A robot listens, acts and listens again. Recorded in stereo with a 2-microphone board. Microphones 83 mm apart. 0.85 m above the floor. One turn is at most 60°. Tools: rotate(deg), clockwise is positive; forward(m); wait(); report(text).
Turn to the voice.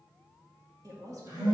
rotate(45)
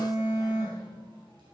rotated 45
wait()
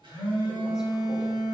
wait()
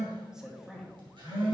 report("Facing the woman speaking, 1 to 2 m away.")